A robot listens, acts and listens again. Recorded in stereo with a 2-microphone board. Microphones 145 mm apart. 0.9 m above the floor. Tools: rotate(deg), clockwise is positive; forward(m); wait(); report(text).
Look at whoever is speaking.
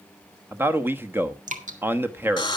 rotate(15)
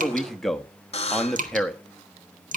report("Found it: a man speaking, straight ahead.")